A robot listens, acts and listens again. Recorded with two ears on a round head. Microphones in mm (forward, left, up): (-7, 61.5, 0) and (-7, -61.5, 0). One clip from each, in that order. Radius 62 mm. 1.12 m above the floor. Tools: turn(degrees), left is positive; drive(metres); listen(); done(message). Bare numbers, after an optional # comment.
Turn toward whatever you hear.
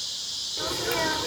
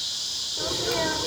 # The sneeze: about 40° left or 140° left.
turn(40)
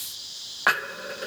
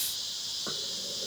listen()
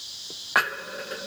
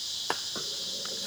done("I heard a sneeze, but can't make it out now. It was about straight ahead or 100° left.")